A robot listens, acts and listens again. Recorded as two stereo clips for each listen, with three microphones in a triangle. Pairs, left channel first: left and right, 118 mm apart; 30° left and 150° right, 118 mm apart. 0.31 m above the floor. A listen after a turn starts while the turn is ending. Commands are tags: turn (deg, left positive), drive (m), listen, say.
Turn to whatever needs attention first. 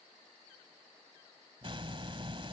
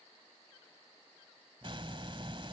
<listen/>
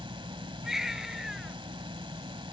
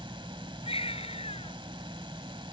<say>Facing the baby crying.</say>